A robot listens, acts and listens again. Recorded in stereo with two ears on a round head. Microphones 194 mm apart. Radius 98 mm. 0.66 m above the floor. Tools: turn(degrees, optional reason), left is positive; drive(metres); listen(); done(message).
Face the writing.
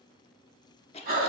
listen()
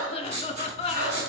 turn(degrees=-30, reason="The writing: about 30° right or 150° right.")
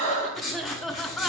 done("Found it: writing, straight ahead, 2 to 4 m away.")